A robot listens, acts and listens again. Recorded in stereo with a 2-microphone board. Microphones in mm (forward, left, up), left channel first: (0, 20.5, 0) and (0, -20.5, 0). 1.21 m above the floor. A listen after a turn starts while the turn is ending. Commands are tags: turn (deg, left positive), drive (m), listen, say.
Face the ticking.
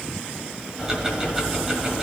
<turn deg="-15"/>
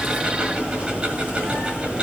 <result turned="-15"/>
<turn deg="-150"/>
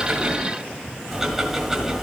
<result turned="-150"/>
<turn deg="-15"/>
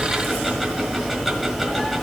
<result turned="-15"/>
<say>Found it: ticking, straight ahead, 1 to 2 m away.</say>